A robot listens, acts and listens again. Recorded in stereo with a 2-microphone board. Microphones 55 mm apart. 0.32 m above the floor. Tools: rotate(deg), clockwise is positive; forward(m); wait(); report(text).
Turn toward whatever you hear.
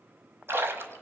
rotate(45)
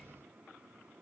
wait()
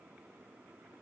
report("I heard a splash, but can't make it out now. It was about straight ahead or 90° right.")